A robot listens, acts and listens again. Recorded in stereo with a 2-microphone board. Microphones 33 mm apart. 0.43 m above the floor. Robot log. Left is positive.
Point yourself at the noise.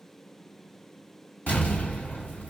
note: The explosion: about 60° left or 120° left.
cmd yaw +60
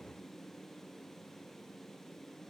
cmd idle
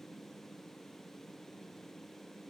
end: I heard an explosion, but can't make it out now. It was about straight ahead or 60° left.